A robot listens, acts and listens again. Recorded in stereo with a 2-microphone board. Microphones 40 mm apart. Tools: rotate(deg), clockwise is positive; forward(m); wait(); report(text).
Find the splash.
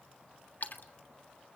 rotate(-55)
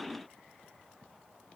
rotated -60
wait()
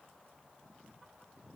report("I heard a splash, but can't make it out now. It was about 5° right or 65° left.")